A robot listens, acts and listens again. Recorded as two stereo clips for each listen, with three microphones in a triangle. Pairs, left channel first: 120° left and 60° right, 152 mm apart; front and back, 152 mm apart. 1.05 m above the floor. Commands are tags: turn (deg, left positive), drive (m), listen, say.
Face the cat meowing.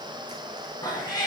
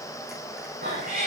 <turn deg="180"/>
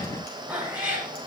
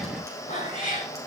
<turn deg="20"/>
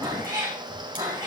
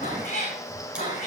<say>Found it: a cat meowing, straight ahead, over 4 m away.</say>